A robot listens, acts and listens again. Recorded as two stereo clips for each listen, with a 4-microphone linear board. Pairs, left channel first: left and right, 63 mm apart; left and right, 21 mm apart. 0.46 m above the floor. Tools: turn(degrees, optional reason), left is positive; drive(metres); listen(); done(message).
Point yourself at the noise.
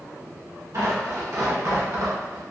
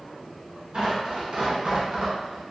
turn(degrees=-60, reason="The tearing paper: about 60° right or 120° right.")
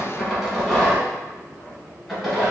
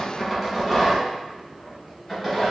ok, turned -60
done("Facing the tearing paper, 1 to 2 m away.")